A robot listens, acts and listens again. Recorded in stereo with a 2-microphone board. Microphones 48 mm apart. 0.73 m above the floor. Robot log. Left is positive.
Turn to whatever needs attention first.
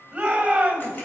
note: The shout: about 20° right or 160° right.
cmd yaw -20
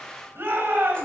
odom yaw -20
note: So it is at 135° right.
cmd yaw -135
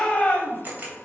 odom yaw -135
note: The shout is now 25° left.
cmd yaw +25
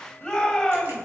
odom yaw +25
end: Found it: a shout, straight ahead.